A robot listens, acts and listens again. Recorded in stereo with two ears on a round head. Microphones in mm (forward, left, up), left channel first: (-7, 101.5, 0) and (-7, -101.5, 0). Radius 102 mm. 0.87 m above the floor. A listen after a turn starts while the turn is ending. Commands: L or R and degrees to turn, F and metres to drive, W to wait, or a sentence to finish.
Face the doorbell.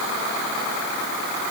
W
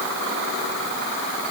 W
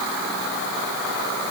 I can't make out a doorbell to turn to.